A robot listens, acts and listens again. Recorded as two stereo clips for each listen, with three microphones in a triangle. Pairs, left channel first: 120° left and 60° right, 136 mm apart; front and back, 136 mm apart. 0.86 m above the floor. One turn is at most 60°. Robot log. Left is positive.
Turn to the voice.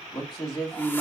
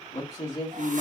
note: The man speaking: 55° left.
cmd yaw +55
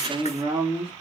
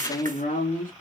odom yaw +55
end: Found it: a man speaking, straight ahead.